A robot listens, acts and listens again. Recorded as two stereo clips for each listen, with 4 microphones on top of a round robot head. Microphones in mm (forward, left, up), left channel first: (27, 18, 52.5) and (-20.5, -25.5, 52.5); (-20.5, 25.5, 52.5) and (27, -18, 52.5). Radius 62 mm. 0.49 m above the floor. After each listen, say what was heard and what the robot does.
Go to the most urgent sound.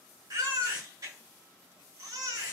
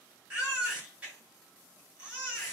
The baby crying: 110° right. Turn 110° right.
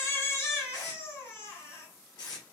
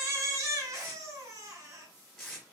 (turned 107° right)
Drive 1.0 m forward.
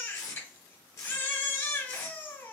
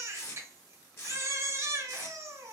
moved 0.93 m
Drive 1.0 m forward.
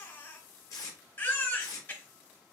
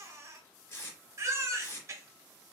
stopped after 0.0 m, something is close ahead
The baby crying is now 10° right. Turn 10° right.
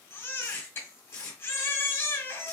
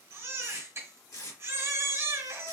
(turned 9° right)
I am next to the baby crying.